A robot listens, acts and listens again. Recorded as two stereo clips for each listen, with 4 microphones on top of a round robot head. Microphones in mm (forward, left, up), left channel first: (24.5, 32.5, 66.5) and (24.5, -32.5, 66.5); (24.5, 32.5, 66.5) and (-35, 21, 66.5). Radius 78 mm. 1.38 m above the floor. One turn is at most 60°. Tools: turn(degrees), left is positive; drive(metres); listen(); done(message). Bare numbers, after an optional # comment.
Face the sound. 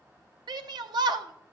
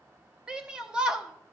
# The shout: 90° right.
turn(-60)
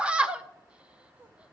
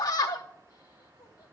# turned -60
# The shout is now 15° right.
turn(-15)
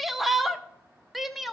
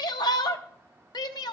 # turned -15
done("Facing the shout.")